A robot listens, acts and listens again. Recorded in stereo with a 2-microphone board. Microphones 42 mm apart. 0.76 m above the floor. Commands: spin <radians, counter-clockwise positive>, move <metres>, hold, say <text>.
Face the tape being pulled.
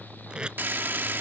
spin -0.35
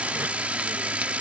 hold
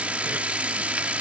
hold
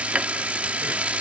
say I heard tape being pulled, but can't make it out now. It was about straight ahead or 140° right.